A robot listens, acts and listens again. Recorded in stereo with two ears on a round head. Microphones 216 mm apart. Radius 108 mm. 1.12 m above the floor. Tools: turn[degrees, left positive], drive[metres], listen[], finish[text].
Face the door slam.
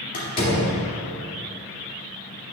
Thought: The door slam: about 35° left or 145° left.
Action: turn[35]
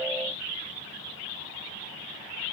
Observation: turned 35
Action: listen[]
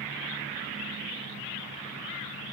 Action: finish[I heard a door slam, but can't make it out now. It was about straight ahead or 110° left.]